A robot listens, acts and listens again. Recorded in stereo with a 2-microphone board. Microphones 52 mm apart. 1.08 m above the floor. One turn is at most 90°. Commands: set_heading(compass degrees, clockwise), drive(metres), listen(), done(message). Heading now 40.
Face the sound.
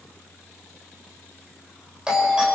set_heading(55)
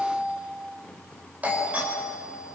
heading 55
set_heading(145)
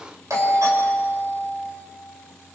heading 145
set_heading(235)
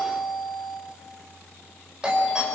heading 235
set_heading(250)
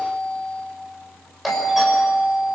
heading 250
done("Facing the doorbell, over 4 m away.")